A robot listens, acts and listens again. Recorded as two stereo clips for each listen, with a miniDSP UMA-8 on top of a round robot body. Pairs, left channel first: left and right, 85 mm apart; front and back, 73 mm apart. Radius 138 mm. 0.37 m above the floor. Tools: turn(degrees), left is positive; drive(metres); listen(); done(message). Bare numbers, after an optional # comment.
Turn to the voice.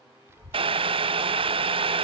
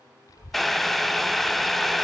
# The child speaking: 30° right.
turn(-30)
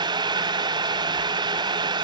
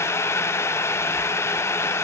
listen()
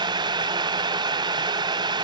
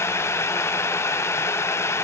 listen()
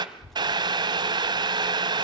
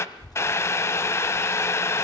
done("Found it: a child speaking, straight ahead, 1 to 2 m away.")